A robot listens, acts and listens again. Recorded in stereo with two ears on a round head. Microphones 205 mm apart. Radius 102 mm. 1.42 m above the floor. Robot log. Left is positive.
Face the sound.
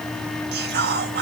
note: The whispering: about 45° right or 135° right.
cmd yaw -45
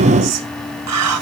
note: So it is at 90° right.
cmd yaw -90
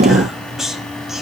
end: Facing the whispering.